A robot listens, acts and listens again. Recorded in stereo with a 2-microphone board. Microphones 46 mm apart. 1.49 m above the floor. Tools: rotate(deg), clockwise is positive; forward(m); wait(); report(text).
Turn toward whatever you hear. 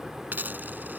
rotate(45)
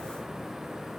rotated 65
wait()
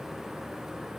report("I heard a dropped coin, but can't make it out now. It was about 20° left or 70° right.")